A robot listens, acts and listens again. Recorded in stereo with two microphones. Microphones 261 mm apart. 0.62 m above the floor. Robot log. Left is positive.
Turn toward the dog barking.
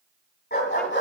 note: The dog barking: about 45° left or 135° left.
cmd yaw +45
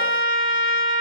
cmd idle
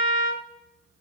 cmd idle
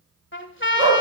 note: So it is at 60° left.
cmd yaw +60
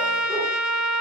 cmd idle
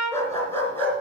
end: Found it: a dog barking, straight ahead, 2 to 4 m away.